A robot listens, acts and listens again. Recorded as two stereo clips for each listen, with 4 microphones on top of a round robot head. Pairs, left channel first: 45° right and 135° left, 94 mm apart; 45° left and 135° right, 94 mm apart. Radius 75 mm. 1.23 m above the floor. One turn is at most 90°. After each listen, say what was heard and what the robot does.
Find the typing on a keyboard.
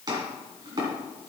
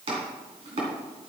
Keep listening.
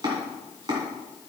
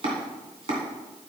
Keep listening.
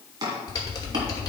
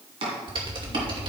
The typing on a keyboard: 100° right. Turn 90° right.
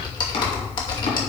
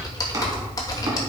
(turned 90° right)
Facing the typing on a keyboard, 2 to 4 m away.